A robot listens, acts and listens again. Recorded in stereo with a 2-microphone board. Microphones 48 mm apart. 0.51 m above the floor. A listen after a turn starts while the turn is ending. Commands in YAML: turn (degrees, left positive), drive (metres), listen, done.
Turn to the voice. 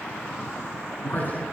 turn: 40
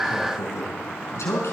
turn: 100
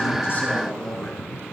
turn: 15
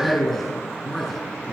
done: "Found it: a man speaking, straight ahead."